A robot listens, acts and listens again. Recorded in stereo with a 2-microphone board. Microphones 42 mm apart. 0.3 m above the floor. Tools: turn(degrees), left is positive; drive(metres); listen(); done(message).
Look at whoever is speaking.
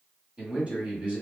turn(degrees=-30)
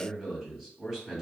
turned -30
done("Facing the man speaking, 1 to 2 m away.")